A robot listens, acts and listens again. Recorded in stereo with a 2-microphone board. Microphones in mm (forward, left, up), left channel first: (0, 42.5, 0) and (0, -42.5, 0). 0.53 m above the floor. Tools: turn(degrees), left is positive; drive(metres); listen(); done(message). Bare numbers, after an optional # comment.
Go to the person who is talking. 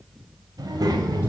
# The child speaking: about 50° right or 130° right.
turn(-50)
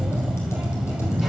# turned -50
listen()
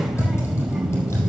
drive(1.0)
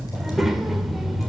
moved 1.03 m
drive(1.0)
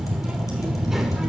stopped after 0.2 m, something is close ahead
done("Arrived at the child speaking, straight ahead.")